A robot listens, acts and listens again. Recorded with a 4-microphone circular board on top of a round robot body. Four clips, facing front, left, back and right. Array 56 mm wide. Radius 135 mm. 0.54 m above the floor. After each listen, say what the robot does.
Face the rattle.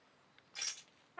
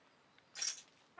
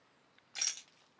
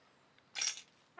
Turn 115° right.
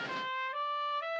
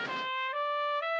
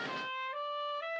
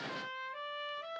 Keep listening.
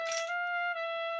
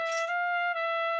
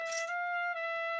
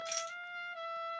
Keep listening.
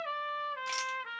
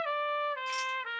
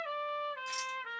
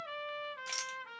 Turn 20° right.
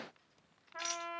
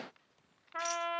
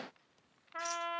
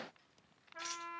Found it: a rattle, straight ahead, 1 to 2 m away.